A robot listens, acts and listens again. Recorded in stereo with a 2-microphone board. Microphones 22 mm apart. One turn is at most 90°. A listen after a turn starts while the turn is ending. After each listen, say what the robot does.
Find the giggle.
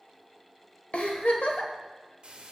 Turn 70° left.
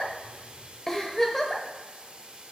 Turn 25° left.
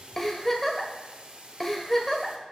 Turn 15° left.
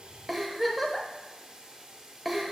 Facing the giggle.